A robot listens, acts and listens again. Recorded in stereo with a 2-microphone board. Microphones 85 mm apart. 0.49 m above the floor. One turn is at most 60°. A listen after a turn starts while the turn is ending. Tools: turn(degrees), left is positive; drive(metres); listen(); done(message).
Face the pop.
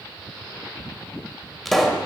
turn(degrees=30)
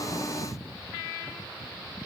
listen()
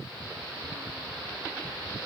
done("I heard a pop, but can't make it out now. It was about 30° right or 150° left.")